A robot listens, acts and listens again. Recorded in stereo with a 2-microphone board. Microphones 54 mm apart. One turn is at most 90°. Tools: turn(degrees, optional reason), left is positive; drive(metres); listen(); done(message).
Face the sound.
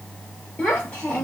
turn(degrees=20, reason="The child speaking: about 20° left or 160° left.")
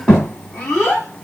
turn(degrees=30)
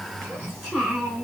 turn(degrees=-20, reason="So it is at 20° right.")
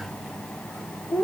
done("Facing the child speaking.")